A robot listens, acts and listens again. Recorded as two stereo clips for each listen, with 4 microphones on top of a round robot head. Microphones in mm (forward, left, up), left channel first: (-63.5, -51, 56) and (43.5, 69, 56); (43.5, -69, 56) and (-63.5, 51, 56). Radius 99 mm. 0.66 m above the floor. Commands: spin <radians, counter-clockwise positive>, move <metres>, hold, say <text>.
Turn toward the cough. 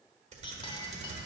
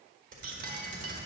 hold
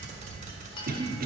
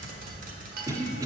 spin 1.13
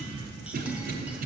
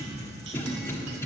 spin 0.44
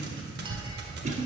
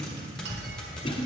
say Found it: a cough, straight ahead, 1 to 2 m away.